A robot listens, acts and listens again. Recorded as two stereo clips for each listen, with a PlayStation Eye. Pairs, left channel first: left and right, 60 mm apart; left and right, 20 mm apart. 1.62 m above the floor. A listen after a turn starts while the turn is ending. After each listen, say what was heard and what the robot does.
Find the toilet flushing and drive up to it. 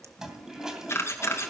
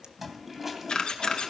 Turn 30° right.
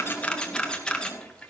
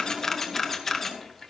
So it is at 20° left. Turn 20° left.
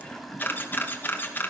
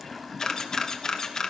Drive 1.0 m forward.
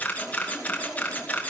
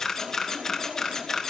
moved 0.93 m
Drive 1.0 m forward.
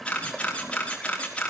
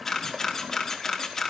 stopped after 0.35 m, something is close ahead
I am next to the toilet flushing.